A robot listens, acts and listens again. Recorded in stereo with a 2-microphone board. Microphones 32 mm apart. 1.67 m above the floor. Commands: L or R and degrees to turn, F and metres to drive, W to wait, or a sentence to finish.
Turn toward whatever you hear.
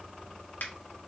L65
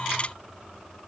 W
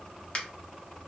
L40
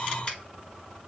W
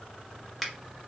Found it: a finger snap, straight ahead.